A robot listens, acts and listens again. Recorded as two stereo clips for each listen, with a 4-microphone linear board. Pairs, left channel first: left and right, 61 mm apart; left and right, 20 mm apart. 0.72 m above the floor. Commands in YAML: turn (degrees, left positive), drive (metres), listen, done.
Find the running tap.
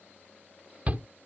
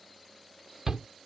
listen: true
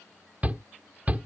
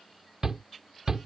listen: true
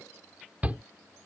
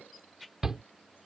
done: "I can't make out a running tap, only a shout."